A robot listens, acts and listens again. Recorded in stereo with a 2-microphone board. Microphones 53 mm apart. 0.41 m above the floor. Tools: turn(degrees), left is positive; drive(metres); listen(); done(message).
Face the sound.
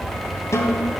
turn(degrees=70)
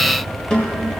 turn(degrees=15)
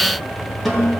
done("Found it: a snare drum, straight ahead.")